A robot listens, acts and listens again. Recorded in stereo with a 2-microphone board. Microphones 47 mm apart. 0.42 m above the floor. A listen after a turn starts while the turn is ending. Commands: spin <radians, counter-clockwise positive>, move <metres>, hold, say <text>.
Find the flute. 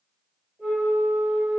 spin -0.52
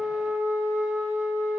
spin -2.44
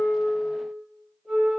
spin 0.17
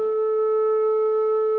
say Found it: a flute, straight ahead.